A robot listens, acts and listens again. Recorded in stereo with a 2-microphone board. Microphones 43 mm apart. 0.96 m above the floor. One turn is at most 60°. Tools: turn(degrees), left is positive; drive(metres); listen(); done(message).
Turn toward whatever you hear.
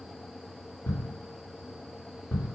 turn(degrees=60)
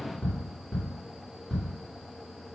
turn(degrees=15)
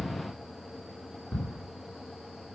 done("Found it: ticking, straight ahead, 2 to 4 m away.")